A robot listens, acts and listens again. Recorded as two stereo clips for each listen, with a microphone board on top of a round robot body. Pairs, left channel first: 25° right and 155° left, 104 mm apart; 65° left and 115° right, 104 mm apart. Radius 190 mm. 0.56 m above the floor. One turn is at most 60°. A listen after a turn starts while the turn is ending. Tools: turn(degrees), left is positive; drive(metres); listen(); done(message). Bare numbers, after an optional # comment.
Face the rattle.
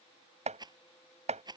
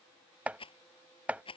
# The rattle: 105° left.
turn(60)
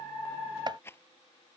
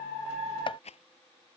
# The rattle is now 45° left.
turn(45)
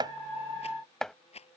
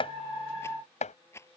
done("Found it: a rattle, straight ahead.")